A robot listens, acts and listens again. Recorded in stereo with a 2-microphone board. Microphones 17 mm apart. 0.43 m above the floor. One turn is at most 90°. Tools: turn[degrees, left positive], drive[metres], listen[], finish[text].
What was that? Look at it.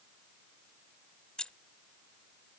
Thought: The keys jangling: about 50° left or 130° left.
Action: turn[50]
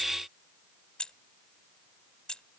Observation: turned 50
Thought: So it is at 65° left.
Action: turn[65]
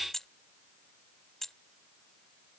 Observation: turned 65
Thought: The keys jangling is now 25° left.
Action: turn[25]
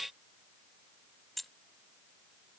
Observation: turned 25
Thought: The keys jangling is now 10° left.
Action: turn[10]
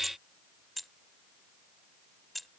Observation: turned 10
Action: finish[Found it: keys jangling, straight ahead.]